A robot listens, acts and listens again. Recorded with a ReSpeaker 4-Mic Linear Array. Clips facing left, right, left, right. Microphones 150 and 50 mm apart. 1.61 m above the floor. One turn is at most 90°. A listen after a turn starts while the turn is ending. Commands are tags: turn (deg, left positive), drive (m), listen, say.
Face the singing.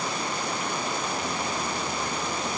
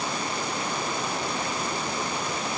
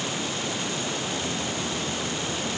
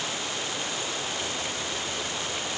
<listen/>
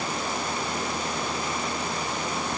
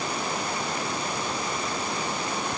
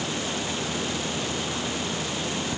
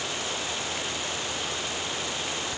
<listen/>
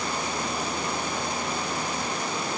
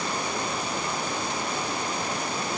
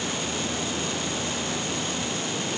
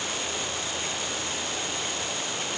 <say>I can't make out singing to turn to.</say>